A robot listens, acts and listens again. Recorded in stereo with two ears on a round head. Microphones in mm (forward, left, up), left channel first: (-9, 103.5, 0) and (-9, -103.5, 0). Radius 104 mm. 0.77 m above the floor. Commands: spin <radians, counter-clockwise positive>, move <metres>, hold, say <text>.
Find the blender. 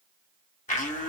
spin 0.61
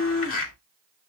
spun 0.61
spin 1.92
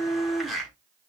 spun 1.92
say Facing the blender, 2 to 4 m away.